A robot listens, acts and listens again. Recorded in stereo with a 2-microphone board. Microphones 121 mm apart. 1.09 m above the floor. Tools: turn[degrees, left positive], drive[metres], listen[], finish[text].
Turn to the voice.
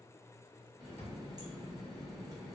Action: listen[]
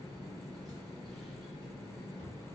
Action: listen[]
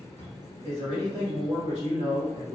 Thought: The man speaking: about 70° right or 110° right.
Action: turn[-70]
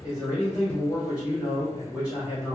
Thought: So it is at 10° right.
Action: turn[-10]
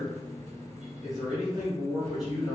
Action: finish[Found it: a man speaking, straight ahead, 1 to 2 m away.]